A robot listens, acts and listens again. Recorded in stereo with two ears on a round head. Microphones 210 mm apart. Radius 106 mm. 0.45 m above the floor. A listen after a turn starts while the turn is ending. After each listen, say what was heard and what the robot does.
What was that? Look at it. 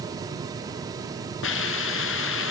The hiss: about 60° left or 120° left. Turn 60° left.
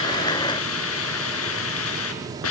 So it is at 65° left. Turn 65° left.
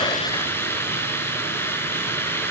The hiss is now 10° left. Turn 10° left.
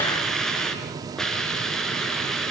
Facing the hiss.